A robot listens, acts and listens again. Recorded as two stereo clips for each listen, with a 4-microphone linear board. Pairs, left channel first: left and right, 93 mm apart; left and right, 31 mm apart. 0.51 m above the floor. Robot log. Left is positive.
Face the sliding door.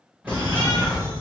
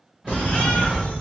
cmd yaw -30
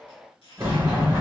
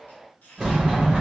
note: So it is at 145° right.
cmd yaw -145
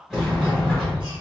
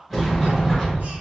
end: Facing the sliding door, 1 to 2 m away.